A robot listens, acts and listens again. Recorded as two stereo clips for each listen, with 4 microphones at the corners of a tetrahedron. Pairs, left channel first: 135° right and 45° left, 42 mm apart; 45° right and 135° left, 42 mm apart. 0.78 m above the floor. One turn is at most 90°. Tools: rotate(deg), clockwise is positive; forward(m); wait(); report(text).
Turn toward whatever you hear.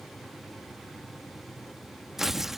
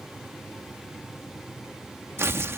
rotate(-90)
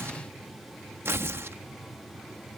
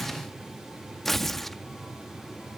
rotate(-35)
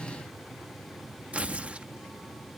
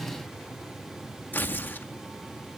rotate(10)
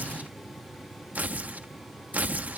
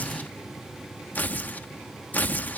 report("Found it: tearing paper, straight ahead.")